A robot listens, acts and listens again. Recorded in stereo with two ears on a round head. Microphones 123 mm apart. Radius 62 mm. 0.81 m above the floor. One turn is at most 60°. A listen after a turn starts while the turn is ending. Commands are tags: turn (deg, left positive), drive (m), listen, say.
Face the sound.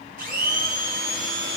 <turn deg="-60"/>
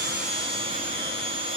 <turn deg="-40"/>
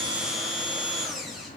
<say>Facing the blender, under 1 m away.</say>